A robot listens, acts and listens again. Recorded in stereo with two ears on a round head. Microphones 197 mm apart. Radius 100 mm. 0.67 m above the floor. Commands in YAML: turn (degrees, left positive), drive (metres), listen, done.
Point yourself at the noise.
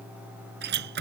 turn: -50
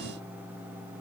listen: true
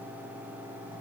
done: "I heard a door slam, but can't make it out now. It was about straight ahead or 80° right."